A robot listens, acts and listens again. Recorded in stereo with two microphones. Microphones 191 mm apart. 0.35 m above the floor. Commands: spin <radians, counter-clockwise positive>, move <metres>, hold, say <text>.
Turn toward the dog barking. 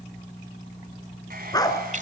spin 0.35
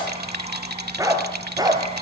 spin -0.35
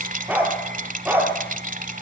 spin -0.17
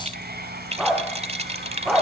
say Found it: a dog barking, straight ahead, over 4 m away.